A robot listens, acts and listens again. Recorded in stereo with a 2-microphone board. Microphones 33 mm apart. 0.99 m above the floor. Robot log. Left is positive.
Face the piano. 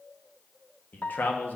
note: The piano: about 50° left or 130° left.
cmd yaw +50
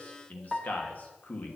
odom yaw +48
note: So it is at 10° left.
cmd yaw +10
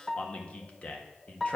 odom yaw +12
end: Facing the piano.